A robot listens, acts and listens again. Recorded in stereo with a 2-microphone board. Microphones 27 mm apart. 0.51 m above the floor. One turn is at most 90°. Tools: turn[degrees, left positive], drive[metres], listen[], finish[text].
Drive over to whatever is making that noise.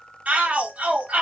Thought: The shout: about 60° right or 120° right.
Action: turn[-60]
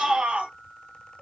Thought: So it is at 60° right.
Action: turn[-60]
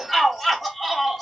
Action: drive[1.0]
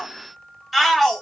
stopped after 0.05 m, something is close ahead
Action: finish[Blocked. The shout is further on, straight ahead.]